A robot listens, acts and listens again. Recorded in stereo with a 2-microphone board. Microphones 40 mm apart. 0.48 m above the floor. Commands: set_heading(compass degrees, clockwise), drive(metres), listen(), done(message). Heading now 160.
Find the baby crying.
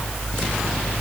listen()
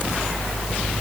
listen()
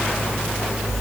done("I can't make out a baby crying.")